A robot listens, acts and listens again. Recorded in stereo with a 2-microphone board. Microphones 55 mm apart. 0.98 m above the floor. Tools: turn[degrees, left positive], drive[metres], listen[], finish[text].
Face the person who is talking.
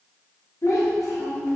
Thought: The child speaking: about 70° left or 110° left.
Action: turn[70]
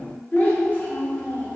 Thought: So it is at 35° left.
Action: turn[35]
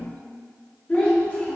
Thought: The child speaking is now 25° left.
Action: turn[25]
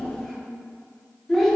Thought: The child speaking is now 10° left.
Action: turn[10]
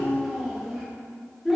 Action: finish[Found it: a child speaking, straight ahead.]